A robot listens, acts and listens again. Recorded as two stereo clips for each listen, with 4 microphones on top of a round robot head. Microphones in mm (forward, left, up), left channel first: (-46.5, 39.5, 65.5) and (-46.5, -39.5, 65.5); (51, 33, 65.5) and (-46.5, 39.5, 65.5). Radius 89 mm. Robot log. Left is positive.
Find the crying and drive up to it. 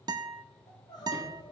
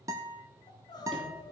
note: The crying: 45° left.
cmd yaw +45
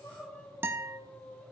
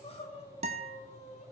note: The crying is now 15° left.
cmd yaw +15
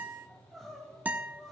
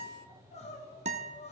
cmd fwd 1.0
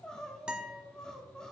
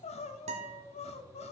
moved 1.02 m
cmd fwd 1.0
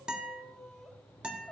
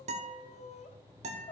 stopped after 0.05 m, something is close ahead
end: Arrived at the crying, straight ahead.